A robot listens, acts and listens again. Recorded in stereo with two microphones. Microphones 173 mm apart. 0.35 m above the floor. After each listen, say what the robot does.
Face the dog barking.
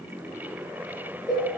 Keep listening.
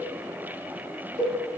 Keep listening.
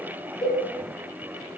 I can't make out a dog barking, only a cowbell.